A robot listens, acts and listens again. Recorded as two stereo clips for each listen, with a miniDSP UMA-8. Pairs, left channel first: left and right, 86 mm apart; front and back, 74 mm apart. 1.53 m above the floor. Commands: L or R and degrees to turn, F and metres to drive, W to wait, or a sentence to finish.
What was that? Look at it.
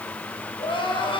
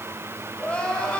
L70
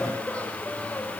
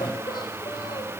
L10
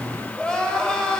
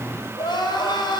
Found it: crying, straight ahead.